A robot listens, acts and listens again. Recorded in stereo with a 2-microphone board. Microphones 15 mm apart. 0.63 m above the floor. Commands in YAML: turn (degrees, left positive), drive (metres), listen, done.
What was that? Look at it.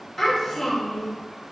turn: 25
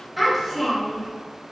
done: "Facing the child speaking."